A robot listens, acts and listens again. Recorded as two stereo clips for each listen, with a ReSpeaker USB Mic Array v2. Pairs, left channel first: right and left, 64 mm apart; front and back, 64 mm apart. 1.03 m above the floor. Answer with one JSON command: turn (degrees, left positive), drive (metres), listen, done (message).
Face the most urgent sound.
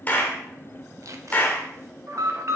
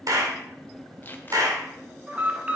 {"turn": 115}
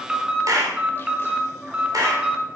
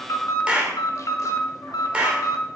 {"turn": 15}
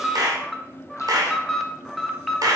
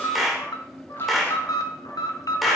{"done": "Found it: an alarm, straight ahead."}